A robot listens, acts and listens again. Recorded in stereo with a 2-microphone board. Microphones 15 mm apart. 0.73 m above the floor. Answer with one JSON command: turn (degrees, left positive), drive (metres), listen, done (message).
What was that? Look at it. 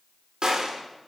{"turn": -65}
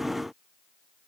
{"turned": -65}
{"listen": true}
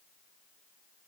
{"done": "I heard a gunshot, but can't make it out now. It was about straight ahead or 50° right."}